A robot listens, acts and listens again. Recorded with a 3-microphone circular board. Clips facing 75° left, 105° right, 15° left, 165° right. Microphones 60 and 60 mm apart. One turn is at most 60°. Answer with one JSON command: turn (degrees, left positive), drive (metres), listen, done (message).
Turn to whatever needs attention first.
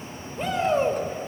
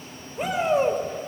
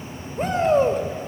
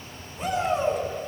{"turn": -30}
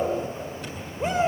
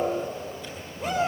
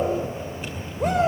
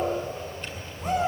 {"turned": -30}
{"turn": 10}
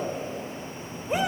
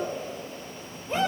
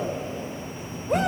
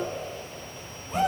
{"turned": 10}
{"done": "Facing the shout, over 4 m away."}